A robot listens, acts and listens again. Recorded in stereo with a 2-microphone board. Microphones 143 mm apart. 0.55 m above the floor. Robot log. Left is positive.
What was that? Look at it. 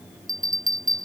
note: The bell: about 70° right or 110° right.
cmd yaw -70
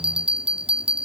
note: So it is at 40° right.
cmd yaw -40
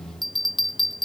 end: Facing the bell.